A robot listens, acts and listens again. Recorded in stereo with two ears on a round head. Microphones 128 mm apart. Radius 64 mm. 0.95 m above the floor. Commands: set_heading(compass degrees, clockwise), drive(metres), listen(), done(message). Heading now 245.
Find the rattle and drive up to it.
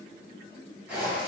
listen()
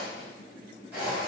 listen()
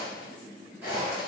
done("I can't make out a rattle to turn to.")